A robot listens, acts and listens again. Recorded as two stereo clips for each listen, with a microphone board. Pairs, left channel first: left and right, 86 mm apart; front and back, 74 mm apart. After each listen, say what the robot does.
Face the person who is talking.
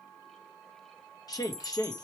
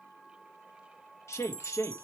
Turn 50° left.
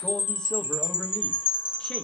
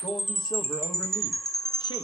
Keep listening.
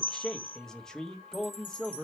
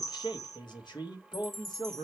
Turn 10° left.
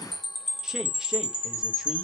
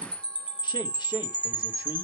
Keep listening.
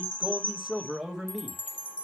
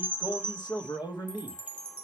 Found it: a man speaking, straight ahead, 1 to 2 m away.